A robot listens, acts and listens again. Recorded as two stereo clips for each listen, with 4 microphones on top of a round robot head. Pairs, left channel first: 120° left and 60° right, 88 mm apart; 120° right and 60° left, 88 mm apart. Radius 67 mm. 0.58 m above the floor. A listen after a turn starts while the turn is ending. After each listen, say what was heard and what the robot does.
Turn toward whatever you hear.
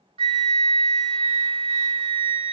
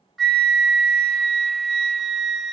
The flute: 30° right. Turn 30° right.
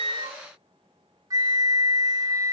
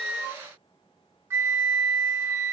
Facing the flute, under 1 m away.